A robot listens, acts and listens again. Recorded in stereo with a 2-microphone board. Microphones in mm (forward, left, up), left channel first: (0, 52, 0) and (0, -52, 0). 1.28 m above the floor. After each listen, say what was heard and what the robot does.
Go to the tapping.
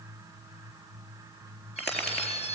Turn 30° left.
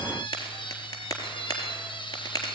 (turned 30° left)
So it is at 140° left. Turn 140° left.
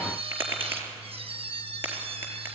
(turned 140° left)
The tapping is now 25° right. Turn 25° right.
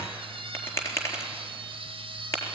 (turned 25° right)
The tapping is now 30° left. Turn 30° left.
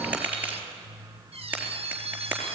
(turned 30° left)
The tapping is now 15° right. Turn 15° right.
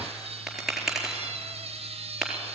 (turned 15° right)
Drive 1.0 m forward.
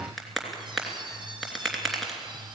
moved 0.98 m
Drive 1.0 m forward.
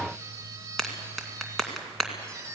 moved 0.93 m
Drive 1.0 m forward.
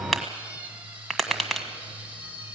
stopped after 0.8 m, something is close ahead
Arrived at the tapping, straight ahead.